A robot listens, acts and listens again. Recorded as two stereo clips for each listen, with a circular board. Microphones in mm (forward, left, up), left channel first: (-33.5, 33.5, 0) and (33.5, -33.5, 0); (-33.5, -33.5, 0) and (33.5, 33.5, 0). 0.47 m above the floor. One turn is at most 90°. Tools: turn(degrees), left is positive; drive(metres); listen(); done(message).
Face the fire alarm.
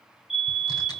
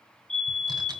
turn(degrees=90)
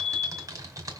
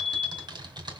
turn(degrees=60)
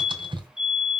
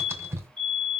turn(degrees=35)
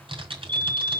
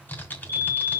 turn(degrees=-15)
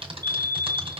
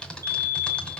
done("Found it: a fire alarm, straight ahead, over 4 m away.")